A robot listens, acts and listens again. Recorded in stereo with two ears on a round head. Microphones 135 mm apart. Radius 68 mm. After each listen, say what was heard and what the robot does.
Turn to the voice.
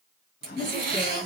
The woman speaking: about 30° right or 150° right. Turn 30° right.
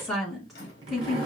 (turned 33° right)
Found it: a woman speaking, straight ahead.